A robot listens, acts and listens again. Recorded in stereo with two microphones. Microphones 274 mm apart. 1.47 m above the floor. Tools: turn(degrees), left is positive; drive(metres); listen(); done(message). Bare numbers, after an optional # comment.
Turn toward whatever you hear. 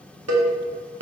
# The cowbell: about 65° right or 115° right.
turn(-65)
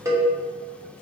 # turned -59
# So it is at 10° right.
turn(-10)
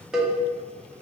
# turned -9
done("Facing the cowbell, under 1 m away.")